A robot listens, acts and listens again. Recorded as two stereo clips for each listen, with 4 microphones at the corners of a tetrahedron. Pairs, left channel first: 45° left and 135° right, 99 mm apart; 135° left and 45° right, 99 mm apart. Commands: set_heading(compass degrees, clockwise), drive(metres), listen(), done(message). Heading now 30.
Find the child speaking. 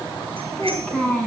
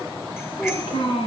set_heading(265)
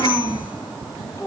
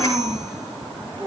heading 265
set_heading(275)
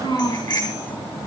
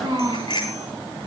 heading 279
done("Found it: a child speaking, straight ahead.")